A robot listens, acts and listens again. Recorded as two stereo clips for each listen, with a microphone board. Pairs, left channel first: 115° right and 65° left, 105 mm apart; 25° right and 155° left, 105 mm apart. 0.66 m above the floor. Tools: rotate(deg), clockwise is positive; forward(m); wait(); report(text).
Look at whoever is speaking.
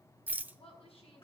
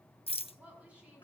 rotate(125)
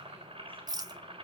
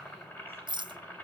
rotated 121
wait()
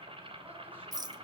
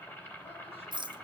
wait()
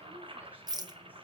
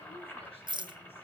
report("Facing where the woman speaking came from. I can't hear it now.")